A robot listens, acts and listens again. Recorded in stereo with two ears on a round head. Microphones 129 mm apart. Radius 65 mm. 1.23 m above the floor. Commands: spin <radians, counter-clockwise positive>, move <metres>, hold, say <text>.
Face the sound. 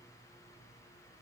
hold
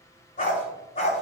spin 0.87
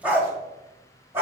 spin -0.35
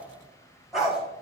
say Found it: a dog barking, straight ahead, 2 to 4 m away.